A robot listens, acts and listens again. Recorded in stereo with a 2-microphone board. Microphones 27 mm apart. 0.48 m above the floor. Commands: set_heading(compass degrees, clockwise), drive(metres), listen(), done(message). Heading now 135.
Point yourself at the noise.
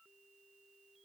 listen()
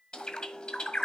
set_heading(95)
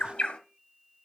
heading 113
set_heading(353)
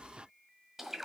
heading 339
set_heading(354)
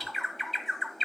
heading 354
done("Found it: a bird, straight ahead, 1 to 2 m away.")